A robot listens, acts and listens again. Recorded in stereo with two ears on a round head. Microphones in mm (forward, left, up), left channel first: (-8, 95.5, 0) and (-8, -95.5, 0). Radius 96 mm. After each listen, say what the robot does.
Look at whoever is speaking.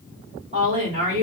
Turn 35° right.
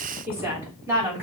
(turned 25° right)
Turn 10° right.
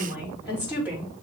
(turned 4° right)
Turn 10° right.
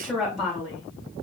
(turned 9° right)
Facing the woman speaking.